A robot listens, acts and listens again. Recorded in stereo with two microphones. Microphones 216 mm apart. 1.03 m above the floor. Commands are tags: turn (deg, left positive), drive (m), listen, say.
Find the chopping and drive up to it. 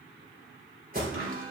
<turn deg="-75"/>
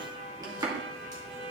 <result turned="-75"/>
<turn deg="-20"/>
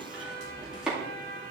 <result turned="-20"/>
<drive m="1.0"/>
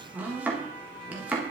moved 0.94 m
<turn deg="-10"/>
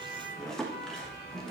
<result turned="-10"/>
<drive m="1.0"/>
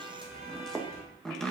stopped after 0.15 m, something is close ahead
<say>I am next to the chopping.</say>